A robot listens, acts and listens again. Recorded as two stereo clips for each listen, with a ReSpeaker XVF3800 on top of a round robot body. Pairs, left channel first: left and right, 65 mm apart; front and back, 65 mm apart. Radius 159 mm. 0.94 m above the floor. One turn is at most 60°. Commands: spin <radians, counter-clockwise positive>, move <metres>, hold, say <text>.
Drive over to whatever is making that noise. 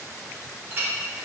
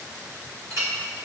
spin -1.05
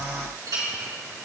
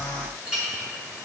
spin -1.05
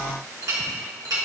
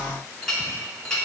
spin -1.05
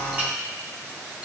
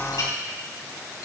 spin -0.35
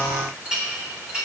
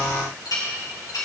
spin -0.17
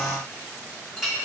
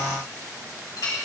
move 1.0
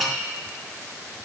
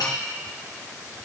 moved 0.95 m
hold
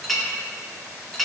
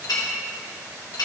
move 1.0
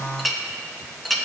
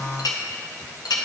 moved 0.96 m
move 1.0
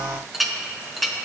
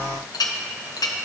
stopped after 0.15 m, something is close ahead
say I am next to the clink.